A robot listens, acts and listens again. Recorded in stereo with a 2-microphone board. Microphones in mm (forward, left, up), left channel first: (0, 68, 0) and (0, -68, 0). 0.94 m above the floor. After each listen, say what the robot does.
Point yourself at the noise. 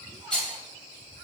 Turn 30° left.
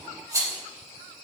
Turn 25° right.
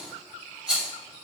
Found it: a rattle, straight ahead.